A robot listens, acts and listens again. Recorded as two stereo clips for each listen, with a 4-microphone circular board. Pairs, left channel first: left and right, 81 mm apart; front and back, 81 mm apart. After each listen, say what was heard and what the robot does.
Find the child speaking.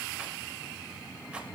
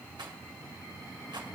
Keep listening.
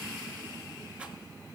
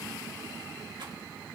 Keep listening.
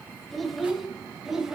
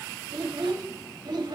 The child speaking: 170° right. Turn 170° right.
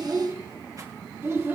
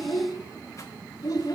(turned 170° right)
The child speaking is now 35° right. Turn 35° right.
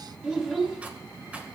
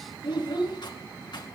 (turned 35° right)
The child speaking is now 10° right. Turn 10° right.
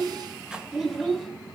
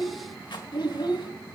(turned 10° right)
Found it: a child speaking, straight ahead, over 4 m away.